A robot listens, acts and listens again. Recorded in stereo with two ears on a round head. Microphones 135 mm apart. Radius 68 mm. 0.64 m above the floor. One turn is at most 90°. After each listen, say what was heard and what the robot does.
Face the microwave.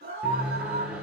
Turn 30° right.
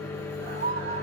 So it is at 20° left. Turn 20° left.
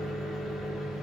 Found it: a microwave, straight ahead.